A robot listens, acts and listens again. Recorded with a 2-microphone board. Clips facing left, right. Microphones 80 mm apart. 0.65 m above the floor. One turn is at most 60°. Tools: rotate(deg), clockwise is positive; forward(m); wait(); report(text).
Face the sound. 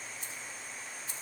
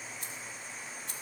rotate(60)
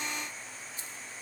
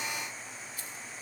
rotate(-25)
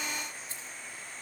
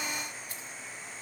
rotate(-30)
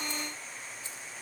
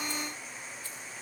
wait()
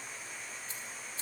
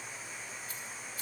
rotate(-30)
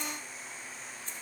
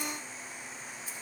report("Facing the keys jangling, 2 to 4 m away.")